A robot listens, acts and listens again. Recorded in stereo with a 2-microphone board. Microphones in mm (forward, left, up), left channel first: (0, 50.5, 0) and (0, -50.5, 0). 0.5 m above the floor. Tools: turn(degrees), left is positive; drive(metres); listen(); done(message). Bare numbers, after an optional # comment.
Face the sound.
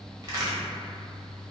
# The crack: about 40° right or 140° right.
turn(-40)
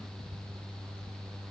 listen()
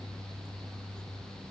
done("I heard a crack, but can't make it out now. It was about straight ahead or 100° right.")